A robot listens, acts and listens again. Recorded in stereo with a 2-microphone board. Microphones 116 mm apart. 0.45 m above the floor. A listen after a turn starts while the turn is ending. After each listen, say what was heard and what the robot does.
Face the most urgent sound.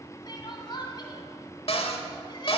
The crying: about 40° left or 140° left. Turn 40° left.
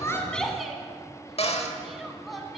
Facing the crying.